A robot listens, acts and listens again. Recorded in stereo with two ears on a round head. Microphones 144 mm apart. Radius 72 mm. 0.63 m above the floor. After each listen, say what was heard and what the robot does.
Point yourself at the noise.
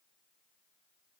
Keep listening.
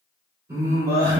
The singing: about 25° right or 155° right. Turn 25° right.
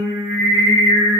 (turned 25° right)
The singing: about 30° right or 150° right. Turn 30° right.
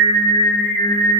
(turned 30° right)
The singing: about 35° right or 145° right. Turn 35° right.
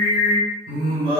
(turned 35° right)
The singing: about 30° right or 150° right. Turn 30° right.
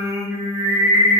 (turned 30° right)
So it is at 10° right. Turn 10° right.
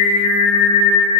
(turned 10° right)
Found it: singing, straight ahead, 1 to 2 m away.